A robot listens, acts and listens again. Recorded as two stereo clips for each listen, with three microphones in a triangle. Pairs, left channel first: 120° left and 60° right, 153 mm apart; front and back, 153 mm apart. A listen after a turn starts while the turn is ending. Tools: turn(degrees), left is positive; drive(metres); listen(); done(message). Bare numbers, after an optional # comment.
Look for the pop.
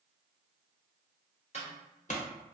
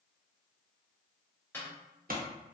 # The pop: 160° left.
turn(160)
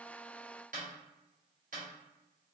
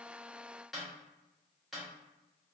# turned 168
# Nothing new. It was at 10° right.
turn(-10)
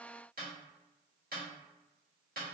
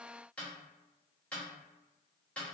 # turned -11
done("Facing where the pop came from. I can't hear it now.")